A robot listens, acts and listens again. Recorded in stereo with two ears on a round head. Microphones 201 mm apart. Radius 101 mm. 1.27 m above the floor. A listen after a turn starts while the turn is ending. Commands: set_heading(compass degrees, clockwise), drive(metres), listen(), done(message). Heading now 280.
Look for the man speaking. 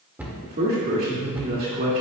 set_heading(325)
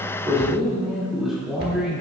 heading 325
done("Facing the man speaking, 2 to 4 m away.")